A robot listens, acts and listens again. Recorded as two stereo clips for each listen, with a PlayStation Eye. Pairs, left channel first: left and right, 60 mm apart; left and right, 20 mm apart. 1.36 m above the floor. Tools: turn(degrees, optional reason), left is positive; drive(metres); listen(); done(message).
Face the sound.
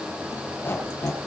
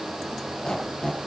turn(degrees=40, reason="The squeak: about 40° left or 140° left.")
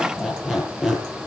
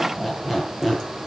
done("Found it: a squeak, straight ahead, over 4 m away.")